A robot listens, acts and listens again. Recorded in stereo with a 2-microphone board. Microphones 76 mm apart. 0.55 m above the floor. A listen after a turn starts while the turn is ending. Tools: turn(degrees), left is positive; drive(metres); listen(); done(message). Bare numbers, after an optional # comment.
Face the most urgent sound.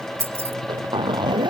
listen()
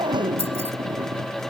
listen()
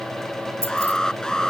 turn(30)
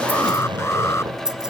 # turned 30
listen()
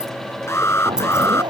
# So it is at 145° left.
turn(145)
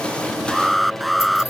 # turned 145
done("Facing the alarm.")